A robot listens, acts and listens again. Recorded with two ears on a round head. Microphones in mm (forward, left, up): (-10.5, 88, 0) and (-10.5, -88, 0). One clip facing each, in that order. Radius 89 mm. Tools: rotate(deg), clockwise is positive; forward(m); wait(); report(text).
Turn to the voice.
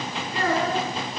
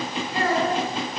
rotate(-90)
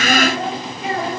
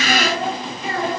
rotate(-25)
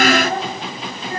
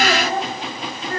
rotate(-15)
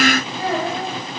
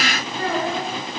rotate(-10)
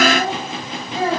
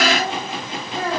rotate(-10)
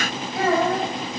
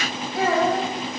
report("Facing the child speaking.")